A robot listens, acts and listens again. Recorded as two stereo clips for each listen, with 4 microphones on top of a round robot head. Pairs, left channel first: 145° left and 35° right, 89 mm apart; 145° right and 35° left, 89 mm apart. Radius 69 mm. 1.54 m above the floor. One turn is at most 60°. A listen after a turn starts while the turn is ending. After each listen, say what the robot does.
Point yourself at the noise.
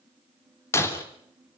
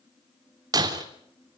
Turn 60° left.
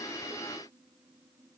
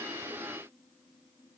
Turn 25° left.
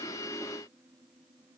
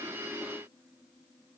Facing where the breaking glass came from. I can't hear it now.